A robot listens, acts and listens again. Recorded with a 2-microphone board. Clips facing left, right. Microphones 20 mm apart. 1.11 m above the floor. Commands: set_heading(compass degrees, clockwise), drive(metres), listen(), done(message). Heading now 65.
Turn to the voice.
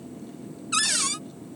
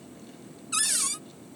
listen()
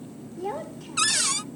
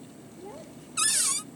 set_heading(10)
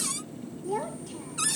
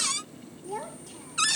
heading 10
done("Found it: a child speaking, straight ahead.")